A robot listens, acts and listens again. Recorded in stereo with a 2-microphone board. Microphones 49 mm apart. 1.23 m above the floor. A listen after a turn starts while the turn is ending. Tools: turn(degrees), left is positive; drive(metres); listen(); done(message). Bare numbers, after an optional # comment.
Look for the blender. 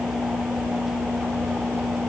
listen()
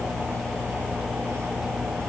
listen()
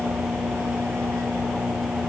done("I can't make out a blender to turn to.")